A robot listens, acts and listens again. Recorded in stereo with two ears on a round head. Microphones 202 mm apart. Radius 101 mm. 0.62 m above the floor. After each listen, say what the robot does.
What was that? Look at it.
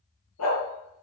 Turn 75° left.
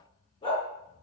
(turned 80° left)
Turn 25° left.
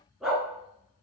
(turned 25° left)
Found it: a dog barking, straight ahead.